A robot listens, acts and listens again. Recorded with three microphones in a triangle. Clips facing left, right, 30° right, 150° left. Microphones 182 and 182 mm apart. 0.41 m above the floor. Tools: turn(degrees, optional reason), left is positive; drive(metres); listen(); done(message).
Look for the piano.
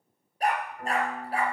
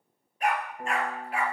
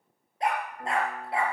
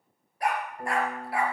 turn(degrees=-150, reason="The piano: 150° right.")
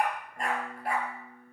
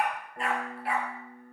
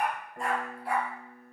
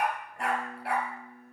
turn(degrees=-55, reason="The piano is now 55° right.")
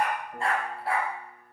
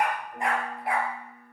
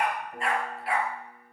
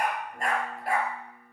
turn(degrees=10, reason="The piano is now 10° left.")
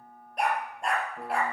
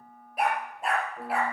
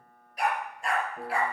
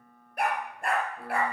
done("Found it: a piano, straight ahead.")